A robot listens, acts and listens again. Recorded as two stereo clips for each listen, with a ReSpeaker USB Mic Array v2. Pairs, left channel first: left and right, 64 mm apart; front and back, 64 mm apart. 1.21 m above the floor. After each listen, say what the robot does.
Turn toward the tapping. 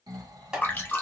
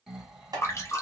Turn 170° right.
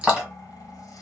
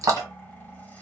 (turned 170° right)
Facing the tapping, 1 to 2 m away.